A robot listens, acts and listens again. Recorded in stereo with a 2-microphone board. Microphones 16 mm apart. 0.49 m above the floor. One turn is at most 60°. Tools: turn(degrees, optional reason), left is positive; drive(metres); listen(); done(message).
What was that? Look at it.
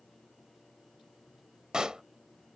turn(degrees=-60, reason="The pop: about 60° right or 120° right.")
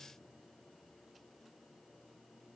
listen()
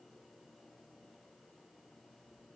done("I heard a pop, but can't make it out now. It was about straight ahead or 60° right.")